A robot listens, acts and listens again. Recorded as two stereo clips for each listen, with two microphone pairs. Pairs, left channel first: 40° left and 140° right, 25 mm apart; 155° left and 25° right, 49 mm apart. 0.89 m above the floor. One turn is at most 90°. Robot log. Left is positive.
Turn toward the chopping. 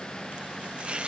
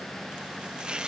note: The chopping: 95° right.
cmd yaw -90
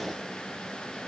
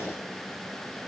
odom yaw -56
note: Nothing new. It was at 40° right.
cmd yaw -40
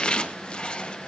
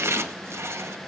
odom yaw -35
end: Facing the chopping.